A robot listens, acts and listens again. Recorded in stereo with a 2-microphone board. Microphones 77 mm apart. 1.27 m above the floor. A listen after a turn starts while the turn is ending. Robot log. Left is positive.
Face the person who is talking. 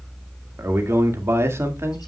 note: The man speaking: about 35° right or 145° right.
cmd yaw -35
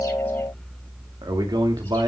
note: So it is at 110° right.
cmd yaw -110
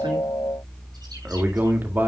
note: The man speaking is now 25° right.
cmd yaw -25
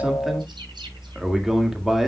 end: Facing the man speaking, 2 to 4 m away.